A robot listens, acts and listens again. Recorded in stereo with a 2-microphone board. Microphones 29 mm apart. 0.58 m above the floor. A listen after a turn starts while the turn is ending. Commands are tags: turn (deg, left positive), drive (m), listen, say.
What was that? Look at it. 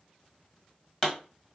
<turn deg="30"/>
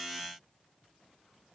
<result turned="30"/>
<listen/>
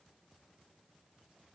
<say>I heard a pop, but can't make it out now. It was about 20° right or 140° left.</say>